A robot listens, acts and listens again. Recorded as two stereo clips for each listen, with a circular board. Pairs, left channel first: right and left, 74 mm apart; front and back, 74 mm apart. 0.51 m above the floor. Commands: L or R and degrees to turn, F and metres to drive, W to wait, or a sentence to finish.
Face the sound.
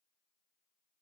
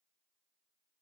W
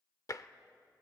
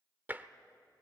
R120
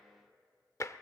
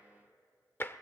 R55
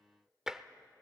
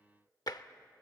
Facing the tapping, under 1 m away.